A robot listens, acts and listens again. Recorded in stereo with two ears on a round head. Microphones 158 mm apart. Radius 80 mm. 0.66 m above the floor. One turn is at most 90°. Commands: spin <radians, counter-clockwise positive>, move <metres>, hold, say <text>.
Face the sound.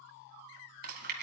spin -0.96
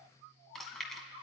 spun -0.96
say Found it: chewing, straight ahead.